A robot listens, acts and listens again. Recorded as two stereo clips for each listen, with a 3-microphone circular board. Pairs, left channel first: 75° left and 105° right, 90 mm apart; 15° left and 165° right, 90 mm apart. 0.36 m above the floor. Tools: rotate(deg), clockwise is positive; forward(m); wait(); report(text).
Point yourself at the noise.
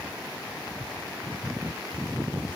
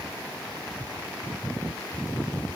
wait()
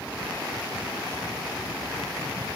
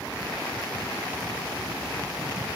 wait()
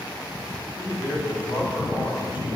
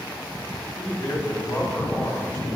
rotate(-75)
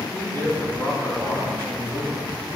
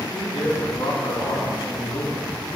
rotate(-25)
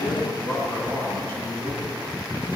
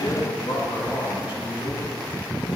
rotate(-20)
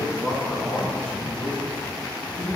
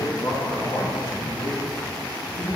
rotate(-10)
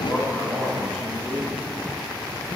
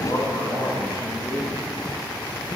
report("Facing the man speaking.")